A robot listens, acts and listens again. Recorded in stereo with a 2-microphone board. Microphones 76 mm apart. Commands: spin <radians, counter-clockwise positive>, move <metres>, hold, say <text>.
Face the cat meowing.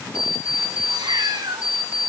spin -1.57
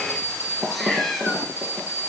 say Found it: a cat meowing, straight ahead, 2 to 4 m away.